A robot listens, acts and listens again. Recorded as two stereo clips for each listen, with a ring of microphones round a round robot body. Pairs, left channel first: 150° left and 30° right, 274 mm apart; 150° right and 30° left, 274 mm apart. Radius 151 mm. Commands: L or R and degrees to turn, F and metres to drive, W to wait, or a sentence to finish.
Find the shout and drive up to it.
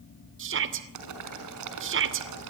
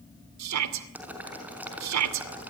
L15
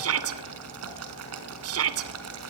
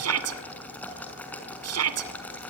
F1.0
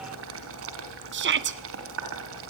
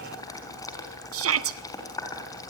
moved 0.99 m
L10
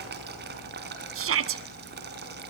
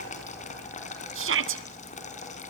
F1.0
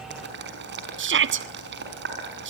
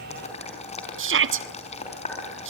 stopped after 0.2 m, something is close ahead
I am next to the shout.